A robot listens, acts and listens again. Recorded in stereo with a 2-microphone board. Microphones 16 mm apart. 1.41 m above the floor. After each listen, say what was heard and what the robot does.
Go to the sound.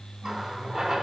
The running tap: about 45° right or 135° right. Turn 45° right.
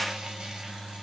Keep listening.
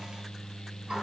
So it is at 90° right. Turn 90° right.
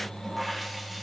Drive 1.0 m forward.
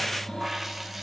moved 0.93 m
The running tap is now 15° right. Turn 15° right.
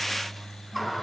Drive 1.0 m forward.
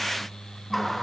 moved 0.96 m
The running tap is now 10° left. Turn 10° left.
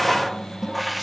Drive 1.0 m forward.
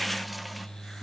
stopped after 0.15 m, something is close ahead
Keep listening.
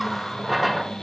Arrived at the running tap, straight ahead.